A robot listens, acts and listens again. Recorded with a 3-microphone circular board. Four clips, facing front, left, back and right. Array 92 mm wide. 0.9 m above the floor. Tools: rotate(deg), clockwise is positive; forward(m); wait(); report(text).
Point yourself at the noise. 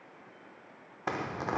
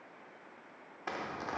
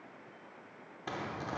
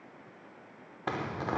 rotate(40)
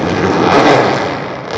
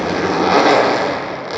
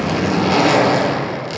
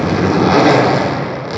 report("Found it: a zipper, straight ahead.")